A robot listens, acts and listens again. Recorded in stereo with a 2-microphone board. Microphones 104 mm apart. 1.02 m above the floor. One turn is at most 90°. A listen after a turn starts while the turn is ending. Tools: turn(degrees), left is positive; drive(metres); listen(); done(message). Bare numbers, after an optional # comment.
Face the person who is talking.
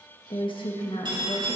# The woman speaking: about 55° left or 125° left.
turn(55)
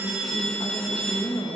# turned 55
# So it is at 55° left.
turn(55)
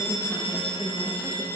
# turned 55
done("Found it: a woman speaking, straight ahead.")